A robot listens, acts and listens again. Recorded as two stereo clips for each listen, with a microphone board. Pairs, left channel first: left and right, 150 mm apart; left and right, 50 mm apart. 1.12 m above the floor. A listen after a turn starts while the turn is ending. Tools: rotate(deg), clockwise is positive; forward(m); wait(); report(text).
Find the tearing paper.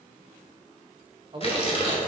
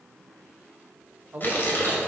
rotate(-40)
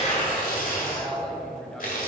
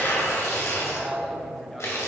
rotate(-95)
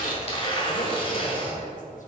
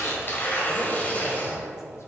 rotate(-40)
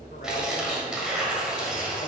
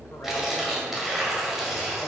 report("Found it: tearing paper, straight ahead, 1 to 2 m away.")